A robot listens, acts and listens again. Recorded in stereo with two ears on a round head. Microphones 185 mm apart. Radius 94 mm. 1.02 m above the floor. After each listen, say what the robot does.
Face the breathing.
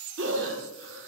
Turn 60° right.
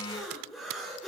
Facing the breathing, 2 to 4 m away.